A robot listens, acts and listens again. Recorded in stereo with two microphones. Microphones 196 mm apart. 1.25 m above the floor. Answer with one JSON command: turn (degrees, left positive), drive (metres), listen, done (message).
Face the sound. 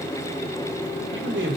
{"turn": -90}
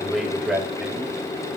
{"done": "Facing the man speaking, over 4 m away."}